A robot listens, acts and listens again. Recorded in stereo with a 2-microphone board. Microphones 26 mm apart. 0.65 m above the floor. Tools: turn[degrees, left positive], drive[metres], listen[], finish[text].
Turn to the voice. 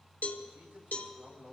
Thought: The man speaking: about 75° right or 105° right.
Action: turn[-75]
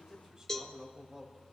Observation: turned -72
Thought: So it is at 25° right.
Action: turn[-25]
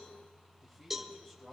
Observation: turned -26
Action: finish[Facing the man speaking, 2 to 4 m away.]